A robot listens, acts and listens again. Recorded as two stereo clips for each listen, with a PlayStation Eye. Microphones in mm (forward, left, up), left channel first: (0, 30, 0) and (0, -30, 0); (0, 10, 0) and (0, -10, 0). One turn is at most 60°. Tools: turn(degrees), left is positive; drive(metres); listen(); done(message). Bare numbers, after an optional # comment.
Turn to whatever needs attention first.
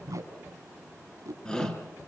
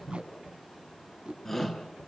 # The shout: about 15° left or 165° left.
turn(15)
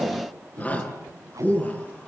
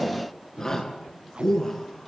# So it is at 150° left.
turn(60)
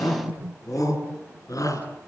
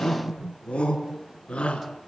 # The shout is now 90° left.
turn(60)
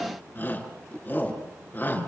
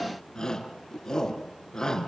# The shout is now 30° left.
turn(30)
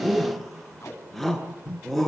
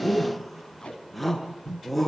done("Found it: a shout, straight ahead.")